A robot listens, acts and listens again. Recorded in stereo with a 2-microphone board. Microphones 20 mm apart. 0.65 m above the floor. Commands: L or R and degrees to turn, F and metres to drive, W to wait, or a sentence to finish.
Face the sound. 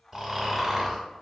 R30
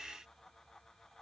W
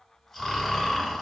L15
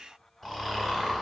Found it: snoring, straight ahead, under 1 m away.